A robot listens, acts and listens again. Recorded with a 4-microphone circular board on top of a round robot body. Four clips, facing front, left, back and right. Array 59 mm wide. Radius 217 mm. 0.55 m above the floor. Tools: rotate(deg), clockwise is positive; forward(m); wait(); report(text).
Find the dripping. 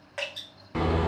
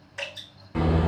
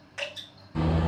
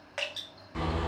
rotate(60)
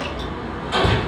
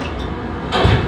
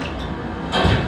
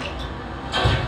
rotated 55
wait()
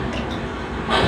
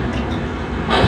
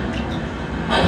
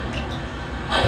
wait()
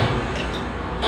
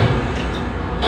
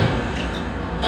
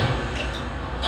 report("Facing where the dripping came from. I can't hear it now.")